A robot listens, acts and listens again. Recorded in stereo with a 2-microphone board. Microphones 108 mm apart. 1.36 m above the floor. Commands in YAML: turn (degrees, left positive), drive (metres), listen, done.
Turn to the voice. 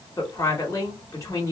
turn: 25
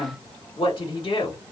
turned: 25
turn: 125
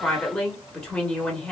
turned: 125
turn: 10
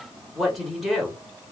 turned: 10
done: "Facing the woman speaking."